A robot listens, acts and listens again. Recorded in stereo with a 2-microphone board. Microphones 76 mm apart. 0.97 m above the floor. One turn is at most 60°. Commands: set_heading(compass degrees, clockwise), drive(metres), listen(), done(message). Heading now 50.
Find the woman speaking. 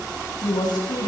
set_heading(350)
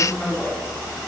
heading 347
set_heading(332)
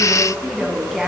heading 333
done("Facing the woman speaking.")